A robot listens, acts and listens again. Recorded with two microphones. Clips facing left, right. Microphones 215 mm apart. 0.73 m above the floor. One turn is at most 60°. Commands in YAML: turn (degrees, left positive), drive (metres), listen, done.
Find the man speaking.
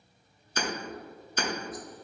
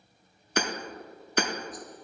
listen: true
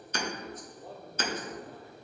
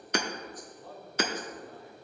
turn: 40
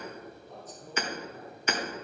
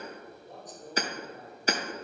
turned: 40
turn: -15
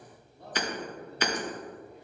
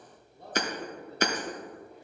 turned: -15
turn: -10
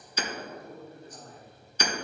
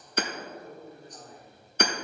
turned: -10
done: "Facing the man speaking, 2 to 4 m away."